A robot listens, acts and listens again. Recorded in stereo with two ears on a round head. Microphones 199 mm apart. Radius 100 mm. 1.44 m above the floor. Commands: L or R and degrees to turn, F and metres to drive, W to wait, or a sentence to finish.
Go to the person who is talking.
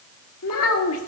L70
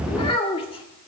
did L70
L25
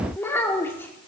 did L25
L10
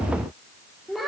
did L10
F1.0
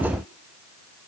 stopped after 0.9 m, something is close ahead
W
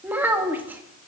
R10
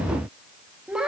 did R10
Arrived at the child speaking, straight ahead.